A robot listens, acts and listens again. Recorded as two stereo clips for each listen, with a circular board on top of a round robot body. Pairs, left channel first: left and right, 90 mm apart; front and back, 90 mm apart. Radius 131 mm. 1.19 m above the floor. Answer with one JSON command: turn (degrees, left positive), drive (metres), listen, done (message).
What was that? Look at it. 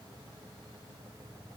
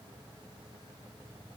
{"listen": true}
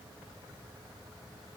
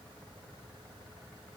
{"listen": true}
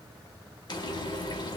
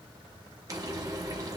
{"turn": 130}
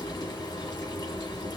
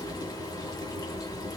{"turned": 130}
{"turn": 45}
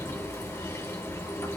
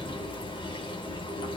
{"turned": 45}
{"turn": 25}
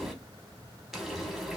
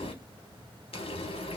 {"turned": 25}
{"done": "Facing the frying."}